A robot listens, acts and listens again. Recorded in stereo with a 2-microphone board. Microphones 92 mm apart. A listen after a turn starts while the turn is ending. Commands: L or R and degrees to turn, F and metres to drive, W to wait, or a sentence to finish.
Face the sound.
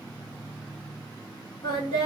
L55
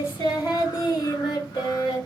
L55
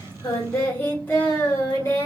L30
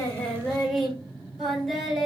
Facing the singing.